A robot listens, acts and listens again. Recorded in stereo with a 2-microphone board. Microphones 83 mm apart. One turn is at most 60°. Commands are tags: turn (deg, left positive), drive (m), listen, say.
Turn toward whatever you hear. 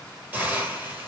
<turn deg="-25"/>
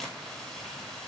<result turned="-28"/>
<listen/>
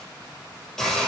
<say>Facing the hiss, 1 to 2 m away.</say>